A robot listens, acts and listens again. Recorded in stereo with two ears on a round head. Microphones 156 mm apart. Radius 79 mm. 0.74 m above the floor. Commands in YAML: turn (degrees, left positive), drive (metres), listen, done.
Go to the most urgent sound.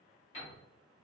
listen: true
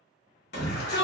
turn: 65
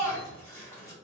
turn: 15
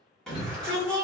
drive: 1.0
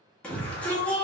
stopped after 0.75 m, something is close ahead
turn: 10
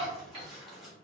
done: "I am next to the shout."